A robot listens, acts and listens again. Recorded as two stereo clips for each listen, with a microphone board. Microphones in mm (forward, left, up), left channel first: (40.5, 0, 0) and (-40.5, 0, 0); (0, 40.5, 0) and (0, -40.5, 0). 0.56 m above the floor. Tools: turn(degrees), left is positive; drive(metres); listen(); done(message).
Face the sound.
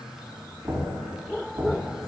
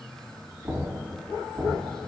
turn(degrees=-135)
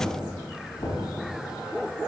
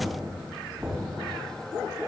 turn(degrees=-20)
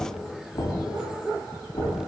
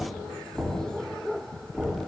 done("Facing the knocking, 2 to 4 m away.")